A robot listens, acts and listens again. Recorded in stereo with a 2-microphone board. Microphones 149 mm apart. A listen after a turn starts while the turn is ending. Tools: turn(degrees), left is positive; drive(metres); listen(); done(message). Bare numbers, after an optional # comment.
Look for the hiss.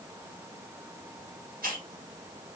# The hiss: about 75° right or 105° right.
turn(-75)
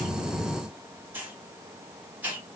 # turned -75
# So it is at 15° right.
turn(-15)
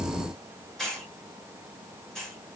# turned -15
done("Facing the hiss, 1 to 2 m away.")